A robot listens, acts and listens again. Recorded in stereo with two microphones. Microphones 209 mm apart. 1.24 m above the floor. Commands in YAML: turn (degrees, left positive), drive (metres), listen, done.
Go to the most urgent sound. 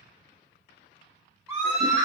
turn: -30
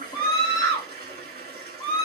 turn: 20
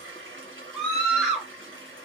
drive: 1.0
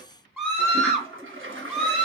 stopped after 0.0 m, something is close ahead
done: "Something is in my way. I am facing the scream but have not reached it."